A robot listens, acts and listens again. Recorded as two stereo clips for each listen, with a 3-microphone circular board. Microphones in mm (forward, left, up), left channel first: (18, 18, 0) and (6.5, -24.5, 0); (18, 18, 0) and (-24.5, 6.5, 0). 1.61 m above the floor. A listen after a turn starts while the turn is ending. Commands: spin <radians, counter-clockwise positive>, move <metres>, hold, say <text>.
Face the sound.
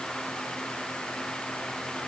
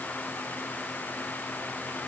hold
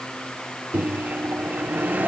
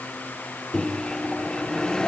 spin -1.05
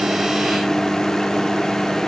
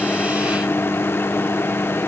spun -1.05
say Facing the microwave.